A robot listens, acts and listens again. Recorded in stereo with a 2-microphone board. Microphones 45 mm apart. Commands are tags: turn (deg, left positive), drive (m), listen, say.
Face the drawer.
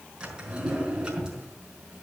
<turn deg="-20"/>
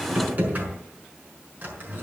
<turn deg="-140"/>
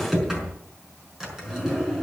<turn deg="-10"/>
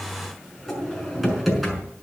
<say>Found it: a drawer, straight ahead.</say>